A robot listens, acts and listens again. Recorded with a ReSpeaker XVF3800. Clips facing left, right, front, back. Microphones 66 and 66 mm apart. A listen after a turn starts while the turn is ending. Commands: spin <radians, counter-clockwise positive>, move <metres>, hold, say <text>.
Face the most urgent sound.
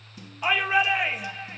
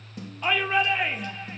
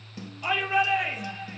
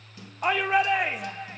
spin 2.97
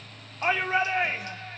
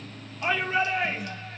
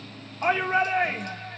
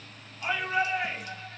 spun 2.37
spin 0.52
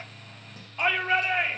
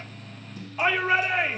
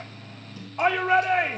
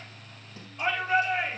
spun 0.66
say Found it: a shout, straight ahead.